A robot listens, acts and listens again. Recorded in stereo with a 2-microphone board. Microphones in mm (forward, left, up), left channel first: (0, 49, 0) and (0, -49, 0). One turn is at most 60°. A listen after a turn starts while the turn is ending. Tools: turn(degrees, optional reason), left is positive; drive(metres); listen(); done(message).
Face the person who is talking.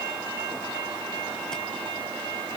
listen()
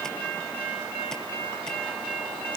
listen()
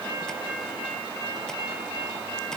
done("I can't make out anyone speaking.")